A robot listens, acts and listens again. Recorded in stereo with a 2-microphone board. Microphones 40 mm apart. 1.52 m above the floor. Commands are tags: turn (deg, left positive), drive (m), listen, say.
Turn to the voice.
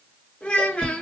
<turn deg="30"/>
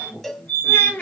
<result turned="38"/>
<turn deg="115"/>
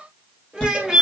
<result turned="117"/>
<say>Found it: a child speaking, straight ahead, 1 to 2 m away.</say>